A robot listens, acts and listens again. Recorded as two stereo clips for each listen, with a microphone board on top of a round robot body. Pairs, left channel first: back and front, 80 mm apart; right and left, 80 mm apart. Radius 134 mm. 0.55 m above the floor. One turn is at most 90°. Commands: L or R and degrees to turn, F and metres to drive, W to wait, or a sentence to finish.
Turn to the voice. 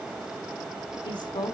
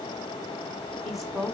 L90
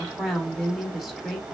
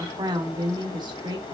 L85
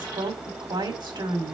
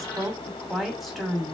Facing the woman speaking, 2 to 4 m away.